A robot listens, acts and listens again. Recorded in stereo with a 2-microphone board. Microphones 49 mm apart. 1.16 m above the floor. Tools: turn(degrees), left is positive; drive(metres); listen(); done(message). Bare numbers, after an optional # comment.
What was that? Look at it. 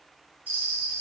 # The bell: about 35° right or 145° right.
turn(-35)
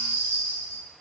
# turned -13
# So it is at 135° right.
turn(-135)
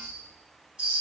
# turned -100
# The bell is now 30° right.
turn(-30)
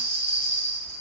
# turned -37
done("Found it: a bell, straight ahead.")